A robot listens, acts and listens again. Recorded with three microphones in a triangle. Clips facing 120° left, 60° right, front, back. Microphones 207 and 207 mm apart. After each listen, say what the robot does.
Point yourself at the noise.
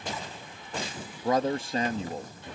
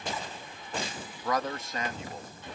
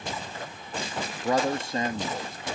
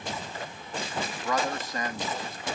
Turn 65° left.
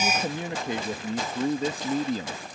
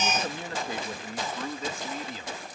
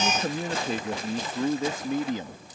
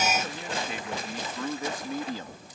Turn 70° left.
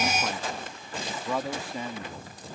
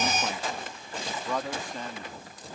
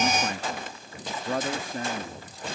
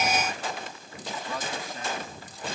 Turn 40° left.
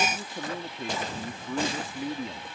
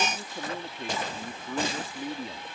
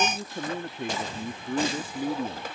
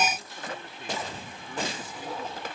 Turn 30° left.
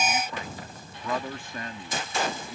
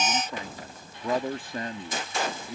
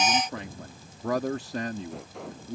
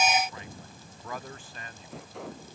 Found it: a man speaking, straight ahead.